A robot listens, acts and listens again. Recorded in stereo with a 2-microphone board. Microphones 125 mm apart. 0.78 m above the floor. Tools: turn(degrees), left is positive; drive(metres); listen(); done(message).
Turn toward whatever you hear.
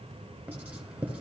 turn(degrees=-30)
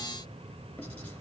listen()
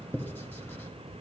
turn(degrees=15)
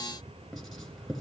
done("Facing the writing.")